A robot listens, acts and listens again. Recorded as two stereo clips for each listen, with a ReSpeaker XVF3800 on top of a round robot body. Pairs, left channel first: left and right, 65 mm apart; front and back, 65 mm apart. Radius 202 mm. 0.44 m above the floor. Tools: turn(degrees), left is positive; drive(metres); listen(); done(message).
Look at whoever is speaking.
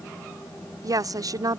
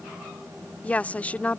turn(degrees=-70)
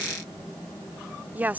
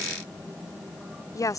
turn(degrees=-25)
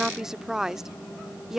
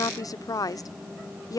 turn(degrees=-10)
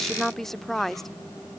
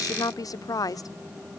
done("Facing the woman speaking.")